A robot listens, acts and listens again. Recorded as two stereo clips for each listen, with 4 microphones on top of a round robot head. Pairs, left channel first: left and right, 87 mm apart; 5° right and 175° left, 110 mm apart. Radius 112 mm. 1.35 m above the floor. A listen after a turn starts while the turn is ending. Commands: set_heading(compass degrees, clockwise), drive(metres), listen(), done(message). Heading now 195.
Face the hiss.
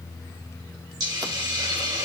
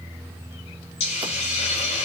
set_heading(235)
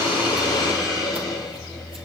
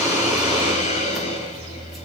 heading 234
done("Facing the hiss, 2 to 4 m away.")